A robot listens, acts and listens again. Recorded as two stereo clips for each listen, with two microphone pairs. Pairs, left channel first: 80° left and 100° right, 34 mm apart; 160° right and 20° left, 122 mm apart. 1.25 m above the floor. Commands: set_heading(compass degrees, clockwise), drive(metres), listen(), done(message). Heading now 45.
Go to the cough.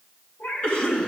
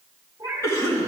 set_heading(265)
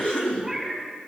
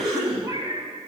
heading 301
set_heading(266)
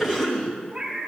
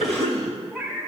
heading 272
drive(1.0)
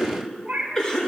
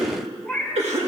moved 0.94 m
set_heading(262)
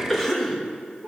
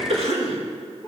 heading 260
drive(1.0)
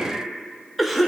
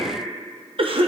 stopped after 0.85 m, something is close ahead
set_heading(270)
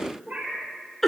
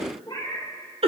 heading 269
done("Arrived at the cough, straight ahead.")